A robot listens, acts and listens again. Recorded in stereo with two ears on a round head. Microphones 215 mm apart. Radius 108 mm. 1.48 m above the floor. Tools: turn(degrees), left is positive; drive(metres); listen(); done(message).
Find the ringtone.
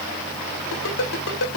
turn(degrees=60)
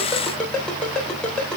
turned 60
done("Facing the ringtone, 2 to 4 m away.")